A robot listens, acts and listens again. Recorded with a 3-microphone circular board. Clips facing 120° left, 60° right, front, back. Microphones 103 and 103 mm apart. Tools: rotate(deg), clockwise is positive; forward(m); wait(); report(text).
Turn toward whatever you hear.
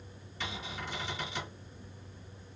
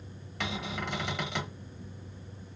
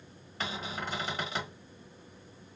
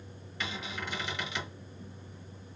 rotate(50)
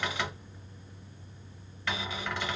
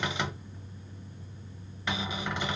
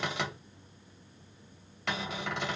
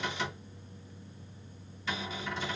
rotate(-10)
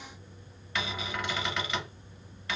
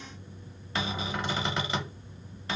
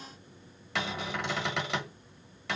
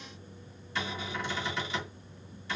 report("Found it: a cupboard door, straight ahead, 1 to 2 m away.")